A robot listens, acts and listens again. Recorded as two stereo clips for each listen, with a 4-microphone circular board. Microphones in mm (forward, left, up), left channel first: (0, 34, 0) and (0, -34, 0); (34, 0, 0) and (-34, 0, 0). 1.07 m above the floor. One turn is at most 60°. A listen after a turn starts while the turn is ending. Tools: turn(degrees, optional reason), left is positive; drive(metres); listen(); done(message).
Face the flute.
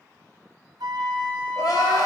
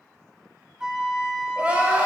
turn(degrees=-60, reason="The flute: 100° right.")
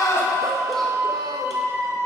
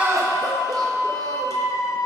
turn(degrees=-40, reason="The flute is now 40° right.")
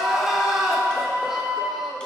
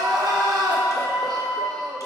turn(degrees=-25, reason="The flute is now 25° right.")
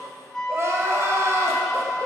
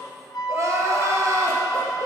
turn(degrees=10, reason="The flute is now 10° left.")
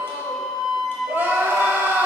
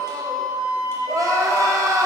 done("Found it: a flute, straight ahead, under 1 m away.")